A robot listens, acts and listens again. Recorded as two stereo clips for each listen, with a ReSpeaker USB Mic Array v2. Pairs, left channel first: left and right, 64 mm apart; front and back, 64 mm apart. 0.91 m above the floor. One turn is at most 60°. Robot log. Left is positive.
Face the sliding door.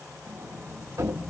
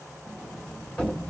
note: The sliding door: 70° right.
cmd yaw -60
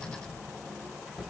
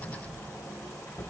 note: The sliding door is now 10° left.
cmd yaw +10
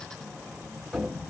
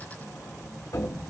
end: Found it: a sliding door, straight ahead, 1 to 2 m away.